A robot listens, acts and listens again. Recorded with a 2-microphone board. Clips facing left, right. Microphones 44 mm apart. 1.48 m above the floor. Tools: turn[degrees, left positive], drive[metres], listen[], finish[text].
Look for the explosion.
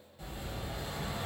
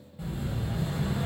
Action: turn[-30]
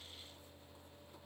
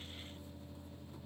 Action: listen[]
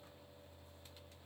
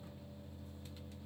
Action: finish[I heard an explosion, but can't make it out now. It was about 20° left or 140° right.]